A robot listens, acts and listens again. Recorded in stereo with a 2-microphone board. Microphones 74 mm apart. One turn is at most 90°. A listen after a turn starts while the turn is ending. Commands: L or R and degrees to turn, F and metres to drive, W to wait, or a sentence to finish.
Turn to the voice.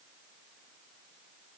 W
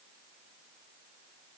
W
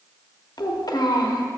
L65
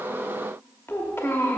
L35
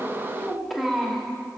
Facing the child speaking.